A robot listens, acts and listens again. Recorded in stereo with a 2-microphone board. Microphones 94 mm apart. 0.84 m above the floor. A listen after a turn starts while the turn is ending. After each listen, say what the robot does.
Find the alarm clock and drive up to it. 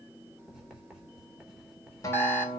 Turn 25° left.
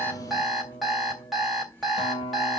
Drive 1.0 m forward.
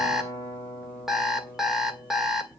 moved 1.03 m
Drive 1.0 m forward.
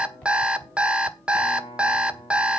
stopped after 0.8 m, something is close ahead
Turn 10° right.
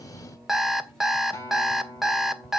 Arrived at the alarm clock, straight ahead.